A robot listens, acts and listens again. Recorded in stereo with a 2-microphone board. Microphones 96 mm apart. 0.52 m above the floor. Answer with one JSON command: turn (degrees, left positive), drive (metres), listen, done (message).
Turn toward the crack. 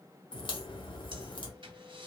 {"turn": 60}
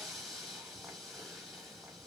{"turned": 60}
{"listen": true}
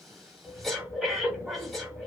{"done": "I heard a crack, but can't make it out now. It was about straight ahead or 60° left."}